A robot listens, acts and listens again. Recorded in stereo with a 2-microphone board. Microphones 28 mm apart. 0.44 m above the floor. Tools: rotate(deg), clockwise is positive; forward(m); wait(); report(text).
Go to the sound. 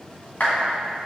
rotate(-90)
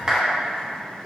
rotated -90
rotate(10)
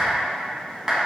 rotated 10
forward(1.0)
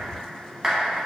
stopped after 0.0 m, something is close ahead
report("Something is in my way. I am facing the clap but have not reached it.")